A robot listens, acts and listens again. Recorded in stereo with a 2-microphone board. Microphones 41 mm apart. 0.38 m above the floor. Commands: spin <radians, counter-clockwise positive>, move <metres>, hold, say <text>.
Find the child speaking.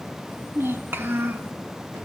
spin -1.22
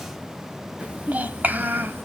spin -0.87
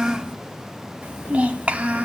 spin -0.52
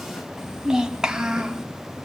spin -0.26
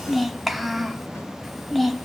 say Facing the child speaking.